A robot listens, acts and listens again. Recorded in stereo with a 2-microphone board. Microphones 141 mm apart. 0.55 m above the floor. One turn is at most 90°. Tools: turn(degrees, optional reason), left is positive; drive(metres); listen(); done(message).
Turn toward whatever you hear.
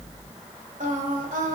turn(degrees=-70, reason="The singing: about 70° right or 110° right.")
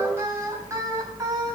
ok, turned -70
turn(degrees=-25, reason="So it is at 25° right.")
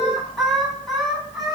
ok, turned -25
done("Facing the singing.")